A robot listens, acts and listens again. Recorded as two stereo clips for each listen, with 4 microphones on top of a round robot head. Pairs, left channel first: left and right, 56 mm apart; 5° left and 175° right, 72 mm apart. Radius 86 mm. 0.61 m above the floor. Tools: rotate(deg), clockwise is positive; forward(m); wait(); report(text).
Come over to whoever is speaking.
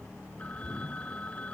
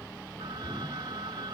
wait()
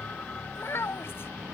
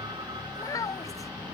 rotate(-45)
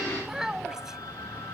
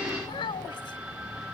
rotate(10)
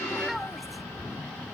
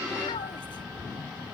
wait()
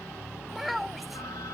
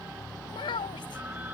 forward(1.0)
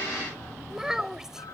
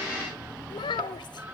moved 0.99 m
rotate(10)
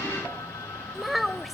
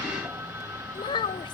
forward(1.0)
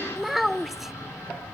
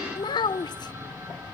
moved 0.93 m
forward(1.0)
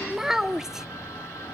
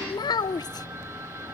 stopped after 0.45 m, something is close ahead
rotate(10)
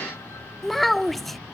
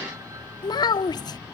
report("I am next to the child speaking.")